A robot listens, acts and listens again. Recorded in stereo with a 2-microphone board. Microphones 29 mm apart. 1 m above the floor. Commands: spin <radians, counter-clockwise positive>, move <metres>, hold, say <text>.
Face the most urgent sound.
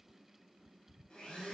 hold
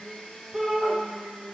spin -0.44
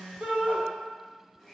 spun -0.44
spin -2.18
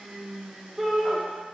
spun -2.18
say Found it: a shout, straight ahead, 1 to 2 m away.